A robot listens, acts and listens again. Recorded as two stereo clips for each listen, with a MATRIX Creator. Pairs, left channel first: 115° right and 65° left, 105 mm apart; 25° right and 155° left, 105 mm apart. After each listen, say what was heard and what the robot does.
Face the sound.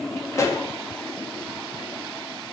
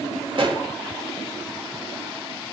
The pop: 170° right. Turn 170° right.
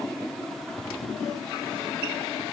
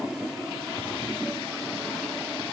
Facing where the pop came from. I can't hear it now.